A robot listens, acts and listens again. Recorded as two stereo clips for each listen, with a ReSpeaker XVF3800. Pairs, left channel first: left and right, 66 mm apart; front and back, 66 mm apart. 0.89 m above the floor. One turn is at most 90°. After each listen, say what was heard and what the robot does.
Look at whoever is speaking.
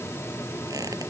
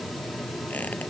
Keep listening.
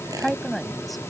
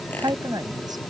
The woman speaking: straight behind. Turn 90° left.
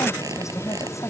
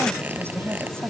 The woman speaking is now 130° left. Turn 90° left.
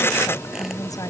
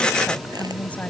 Nothing new. It was at 40° left. Turn 40° left.
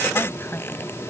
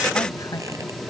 Keep listening.
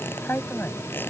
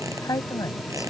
The woman speaking is now 30° left. Turn 30° left.
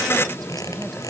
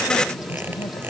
Keep listening.
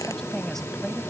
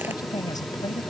Keep listening.
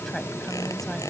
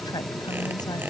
I heard a woman speaking from this way, but can't make it out now.